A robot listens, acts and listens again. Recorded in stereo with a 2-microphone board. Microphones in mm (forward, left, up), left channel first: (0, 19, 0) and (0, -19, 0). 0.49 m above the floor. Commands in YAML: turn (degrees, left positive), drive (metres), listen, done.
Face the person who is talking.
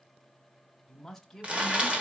turn: 30
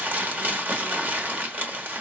listen: true
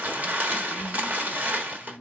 turn: -30
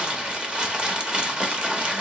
listen: true
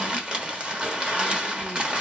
listen: true
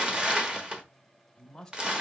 turn: 10
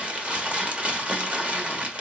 listen: true
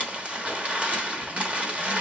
listen: true
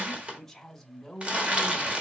done: "Found it: a man speaking, straight ahead, 1 to 2 m away."